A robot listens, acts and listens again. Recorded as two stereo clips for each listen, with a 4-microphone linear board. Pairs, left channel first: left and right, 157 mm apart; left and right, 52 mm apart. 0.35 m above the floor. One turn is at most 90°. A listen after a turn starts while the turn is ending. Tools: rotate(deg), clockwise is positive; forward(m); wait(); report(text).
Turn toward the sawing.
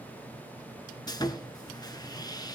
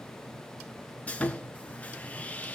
rotate(-25)
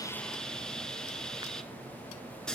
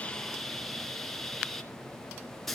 report("Facing the sawing, 1 to 2 m away.")